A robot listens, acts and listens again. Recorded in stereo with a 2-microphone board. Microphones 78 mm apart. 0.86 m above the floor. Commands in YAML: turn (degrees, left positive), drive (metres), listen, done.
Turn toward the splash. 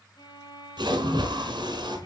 turn: -75
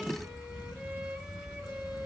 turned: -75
listen: true
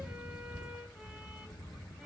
done: "I heard a splash, but can't make it out now. It was about straight ahead or 30° right."